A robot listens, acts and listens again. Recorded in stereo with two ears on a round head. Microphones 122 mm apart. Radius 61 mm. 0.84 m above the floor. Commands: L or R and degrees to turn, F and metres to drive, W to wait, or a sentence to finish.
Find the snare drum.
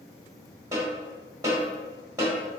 R25
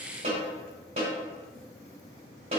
R130
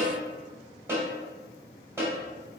R20
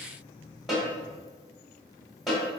Found it: a snare drum, straight ahead, 2 to 4 m away.